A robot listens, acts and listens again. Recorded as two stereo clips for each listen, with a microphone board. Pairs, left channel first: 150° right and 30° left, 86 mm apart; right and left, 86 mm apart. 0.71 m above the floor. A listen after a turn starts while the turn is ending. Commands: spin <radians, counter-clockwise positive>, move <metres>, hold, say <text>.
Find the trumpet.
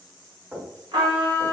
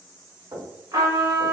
spin 0.87
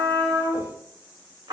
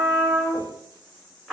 say Facing the trumpet, 1 to 2 m away.